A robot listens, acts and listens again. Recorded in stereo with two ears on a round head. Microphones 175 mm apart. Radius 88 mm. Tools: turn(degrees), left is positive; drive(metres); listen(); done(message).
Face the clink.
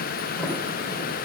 listen()
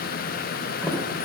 listen()
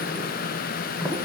done("I can't make out a clink, only a sliding door.")